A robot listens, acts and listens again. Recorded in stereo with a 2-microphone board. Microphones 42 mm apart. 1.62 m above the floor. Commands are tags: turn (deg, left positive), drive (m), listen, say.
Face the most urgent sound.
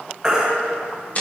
<turn deg="-20"/>
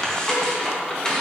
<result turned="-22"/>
<listen/>
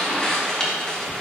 <listen/>
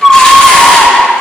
<say>Found it: a baby crying, straight ahead.</say>